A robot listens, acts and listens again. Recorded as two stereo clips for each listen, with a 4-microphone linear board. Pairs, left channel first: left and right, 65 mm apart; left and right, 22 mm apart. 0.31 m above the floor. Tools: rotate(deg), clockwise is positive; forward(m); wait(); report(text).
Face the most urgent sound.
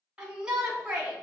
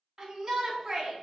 rotate(30)
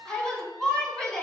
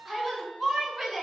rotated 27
rotate(-15)
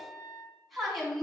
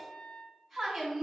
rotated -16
report("Facing the shout.")